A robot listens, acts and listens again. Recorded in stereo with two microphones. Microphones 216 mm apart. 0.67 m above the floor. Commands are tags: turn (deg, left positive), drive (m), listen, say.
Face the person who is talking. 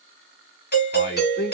<turn deg="50"/>
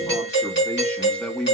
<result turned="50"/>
<say>Facing the man speaking.</say>